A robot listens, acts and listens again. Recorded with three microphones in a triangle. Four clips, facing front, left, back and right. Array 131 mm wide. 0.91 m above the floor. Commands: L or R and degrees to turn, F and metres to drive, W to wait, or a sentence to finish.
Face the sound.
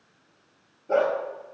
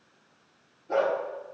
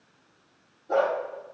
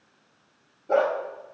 R70
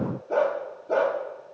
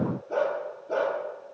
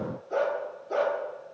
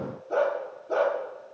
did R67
Found it: a dog barking, straight ahead, over 4 m away.